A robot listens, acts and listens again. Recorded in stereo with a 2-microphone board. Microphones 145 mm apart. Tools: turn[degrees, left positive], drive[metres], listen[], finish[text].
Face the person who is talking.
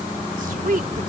Thought: The woman speaking: about 70° right or 110° right.
Action: turn[-70]
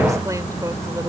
Thought: So it is at 25° right.
Action: turn[-25]
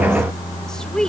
Action: finish[Facing the woman speaking.]